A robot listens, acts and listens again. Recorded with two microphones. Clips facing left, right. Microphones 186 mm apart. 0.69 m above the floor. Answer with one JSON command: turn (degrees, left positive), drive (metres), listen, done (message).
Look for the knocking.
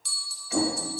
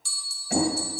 {"turn": -65}
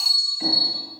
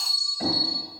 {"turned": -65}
{"listen": true}
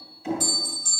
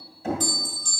{"turn": -55}
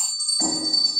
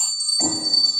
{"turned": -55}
{"turn": -15}
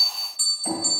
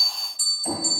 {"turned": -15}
{"done": "Found it: knocking, straight ahead, 2 to 4 m away."}